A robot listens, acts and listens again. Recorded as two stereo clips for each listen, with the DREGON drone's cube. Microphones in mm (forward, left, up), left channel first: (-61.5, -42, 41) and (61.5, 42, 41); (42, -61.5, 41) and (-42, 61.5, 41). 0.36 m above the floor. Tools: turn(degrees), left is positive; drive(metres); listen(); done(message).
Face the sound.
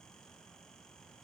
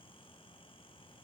listen()
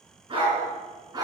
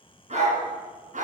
turn(degrees=95)
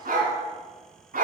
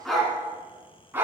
turn(degrees=50)
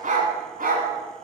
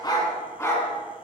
turn(degrees=20)
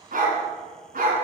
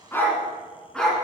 turn(degrees=30)
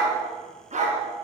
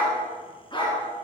done("Facing the dog barking.")